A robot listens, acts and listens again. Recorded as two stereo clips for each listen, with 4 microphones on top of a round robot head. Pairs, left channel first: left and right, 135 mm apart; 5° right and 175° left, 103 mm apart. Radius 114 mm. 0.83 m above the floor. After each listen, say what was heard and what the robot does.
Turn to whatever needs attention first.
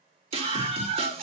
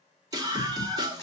The scream: 130° right. Turn 130° right.
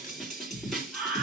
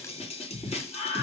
Facing the scream, 2 to 4 m away.